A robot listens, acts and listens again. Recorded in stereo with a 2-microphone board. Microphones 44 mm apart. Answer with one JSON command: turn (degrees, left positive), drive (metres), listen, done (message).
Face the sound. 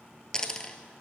{"turn": 15}
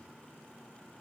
{"listen": true}
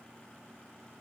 {"done": "I heard a dropped coin, but can't make it out now. It was about straight ahead or 150° left."}